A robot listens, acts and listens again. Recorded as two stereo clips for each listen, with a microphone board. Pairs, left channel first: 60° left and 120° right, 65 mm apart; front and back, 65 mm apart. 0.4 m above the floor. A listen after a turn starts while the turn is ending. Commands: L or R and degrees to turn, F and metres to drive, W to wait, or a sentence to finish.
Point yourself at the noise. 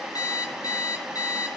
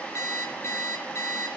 L40
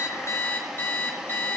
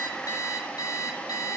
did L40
Found it: an alarm clock, straight ahead, over 4 m away.